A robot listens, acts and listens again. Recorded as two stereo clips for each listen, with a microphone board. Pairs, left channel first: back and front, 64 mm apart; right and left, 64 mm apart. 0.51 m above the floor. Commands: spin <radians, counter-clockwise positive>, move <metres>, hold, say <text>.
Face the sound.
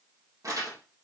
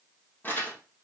spin -0.52
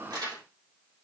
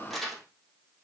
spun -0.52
say Found it: crumpling, straight ahead, 2 to 4 m away.